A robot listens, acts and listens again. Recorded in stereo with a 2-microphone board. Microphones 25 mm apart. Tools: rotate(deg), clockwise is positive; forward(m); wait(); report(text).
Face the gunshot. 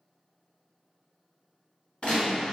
rotate(-55)
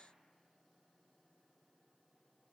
wait()
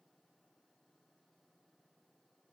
report("I heard a gunshot, but can't make it out now. It was about straight ahead or 70° left.")